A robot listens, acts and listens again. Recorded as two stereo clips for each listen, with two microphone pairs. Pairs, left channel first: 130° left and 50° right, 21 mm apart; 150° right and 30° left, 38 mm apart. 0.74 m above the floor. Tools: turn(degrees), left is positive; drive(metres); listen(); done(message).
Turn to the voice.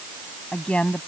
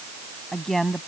turn(degrees=120)
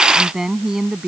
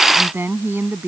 turn(degrees=15)
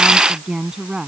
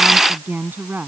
done("Facing the woman speaking.")